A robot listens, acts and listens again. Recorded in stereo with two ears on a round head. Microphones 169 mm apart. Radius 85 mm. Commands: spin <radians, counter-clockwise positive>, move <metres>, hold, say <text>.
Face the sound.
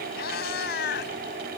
spin 1.05
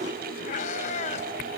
spin 0.70
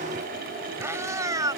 spin -0.35
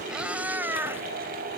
spin -0.17
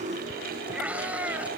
say Facing the cat meowing.